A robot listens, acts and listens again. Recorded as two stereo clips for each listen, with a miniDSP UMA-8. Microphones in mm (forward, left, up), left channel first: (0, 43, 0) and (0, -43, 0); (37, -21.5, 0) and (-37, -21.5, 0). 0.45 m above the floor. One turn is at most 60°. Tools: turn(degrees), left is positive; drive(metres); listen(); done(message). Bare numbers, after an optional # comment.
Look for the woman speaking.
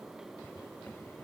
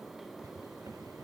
listen()
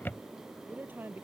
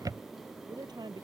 # The woman speaking: 155° right.
turn(-60)
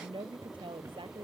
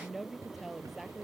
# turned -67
# The woman speaking is now 90° right.
turn(-60)
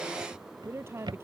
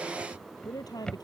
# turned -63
# The woman speaking is now 30° right.
turn(-30)
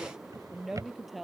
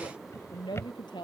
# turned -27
done("Found it: a woman speaking, straight ahead.")